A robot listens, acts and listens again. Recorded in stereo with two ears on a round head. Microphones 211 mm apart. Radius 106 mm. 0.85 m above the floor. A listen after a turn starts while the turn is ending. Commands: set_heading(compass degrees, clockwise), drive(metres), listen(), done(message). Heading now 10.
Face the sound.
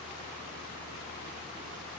listen()
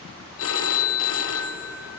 set_heading(310)
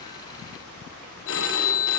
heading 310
set_heading(255)
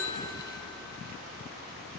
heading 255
listen()
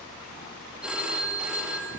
done("Facing the phone ringing.")